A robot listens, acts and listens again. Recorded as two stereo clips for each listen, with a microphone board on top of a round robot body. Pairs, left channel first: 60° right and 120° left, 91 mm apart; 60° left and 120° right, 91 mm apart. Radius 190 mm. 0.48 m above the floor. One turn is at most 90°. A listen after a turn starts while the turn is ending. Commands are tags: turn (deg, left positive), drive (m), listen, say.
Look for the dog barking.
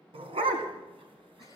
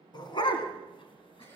<turn deg="90"/>
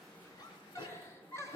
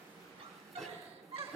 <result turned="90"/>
<turn deg="-35"/>
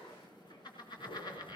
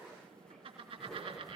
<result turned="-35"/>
<listen/>
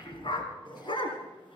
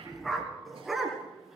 <turn deg="-30"/>
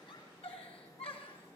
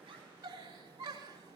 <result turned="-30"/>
<listen/>
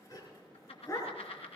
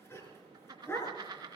<say>Facing the dog barking, 2 to 4 m away.</say>